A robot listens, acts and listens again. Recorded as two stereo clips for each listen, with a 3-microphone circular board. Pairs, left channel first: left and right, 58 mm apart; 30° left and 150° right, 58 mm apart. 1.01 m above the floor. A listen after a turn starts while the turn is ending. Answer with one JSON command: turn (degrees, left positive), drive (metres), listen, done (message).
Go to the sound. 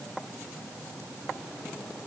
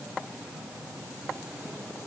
{"listen": true}
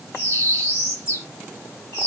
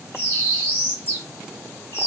{"turn": 75}
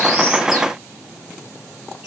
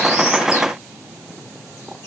{"listen": true}
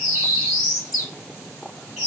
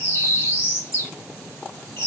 {"drive": 1.0}
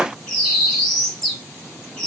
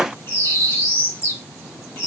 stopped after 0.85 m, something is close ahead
{"turn": 10}
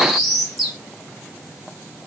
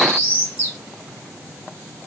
{"done": "Arrived at the bird, straight ahead."}